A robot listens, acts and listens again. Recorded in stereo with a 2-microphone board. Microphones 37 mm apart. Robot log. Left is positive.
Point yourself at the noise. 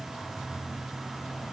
cmd idle
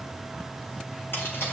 cmd yaw +90
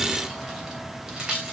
note: So it is at 20° right.
cmd yaw -20
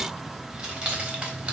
note: The keys jangling is now 25° right.
cmd yaw -25
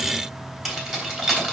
end: Facing the keys jangling.